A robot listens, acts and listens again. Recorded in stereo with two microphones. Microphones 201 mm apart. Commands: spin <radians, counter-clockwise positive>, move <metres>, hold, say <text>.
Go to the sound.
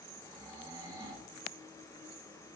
spin -0.44
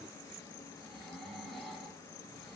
move 1.0
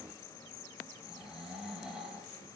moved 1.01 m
move 1.0
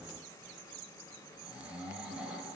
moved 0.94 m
move 1.0
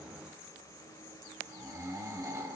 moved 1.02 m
spin -0.35
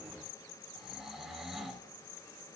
move 1.0
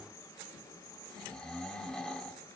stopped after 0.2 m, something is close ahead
say I am next to the snoring.